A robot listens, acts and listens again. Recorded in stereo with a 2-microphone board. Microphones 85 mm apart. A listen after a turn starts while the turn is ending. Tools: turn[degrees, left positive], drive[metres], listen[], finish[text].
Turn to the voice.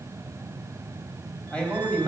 Action: turn[30]
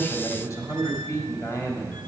Thought: So it is at 140° left.
Action: turn[140]
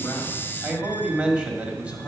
Thought: The man speaking is now 15° right.
Action: turn[-15]
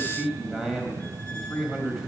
Action: finish[Found it: a man speaking, straight ahead, 1 to 2 m away.]